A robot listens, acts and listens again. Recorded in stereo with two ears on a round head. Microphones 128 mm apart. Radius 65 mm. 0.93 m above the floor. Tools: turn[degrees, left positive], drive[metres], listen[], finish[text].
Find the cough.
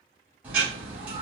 Action: listen[]
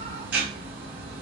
Action: listen[]
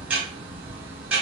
Action: finish[I can't make out a cough to turn to.]